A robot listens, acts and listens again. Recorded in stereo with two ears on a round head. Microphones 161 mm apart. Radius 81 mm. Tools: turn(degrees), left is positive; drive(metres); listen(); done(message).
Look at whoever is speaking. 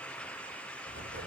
listen()
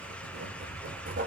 listen()
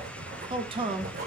turn(degrees=-30)
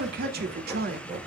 turn(degrees=-120)
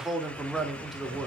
done("Found it: a man speaking, straight ahead.")